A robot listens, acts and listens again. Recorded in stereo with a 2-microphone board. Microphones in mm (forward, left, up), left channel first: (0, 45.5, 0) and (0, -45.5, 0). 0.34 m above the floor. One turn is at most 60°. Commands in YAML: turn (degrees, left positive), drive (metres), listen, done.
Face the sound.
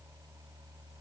listen: true
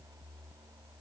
listen: true
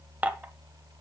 turn: -20
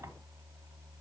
listen: true
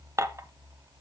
turn: -60
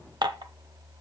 turn: -60
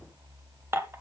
turn: -35
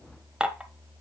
turn: -10
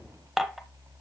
done: "Facing the dishes clattering, under 1 m away."